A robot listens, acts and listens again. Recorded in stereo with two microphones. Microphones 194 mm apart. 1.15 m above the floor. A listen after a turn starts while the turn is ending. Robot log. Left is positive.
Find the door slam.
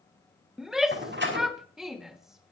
note: The door slam: about 65° right or 115° right.
cmd yaw -65
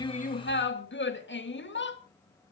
cmd idle
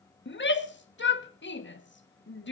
end: I heard a door slam, but can't make it out now. It was about straight ahead or 50° right.